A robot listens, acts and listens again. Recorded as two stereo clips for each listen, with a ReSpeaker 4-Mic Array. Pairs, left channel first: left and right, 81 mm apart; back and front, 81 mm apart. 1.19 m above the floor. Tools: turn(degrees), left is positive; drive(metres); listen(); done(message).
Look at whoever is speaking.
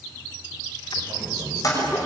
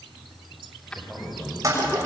turn(degrees=-100)
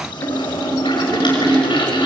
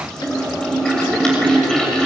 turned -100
listen()
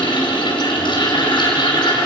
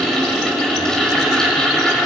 listen()
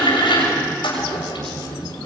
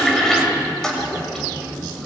turn(degrees=-50)
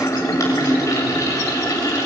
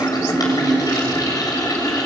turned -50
listen()
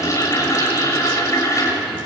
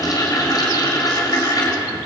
listen()
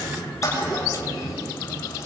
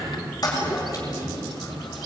done("Facing the man speaking.")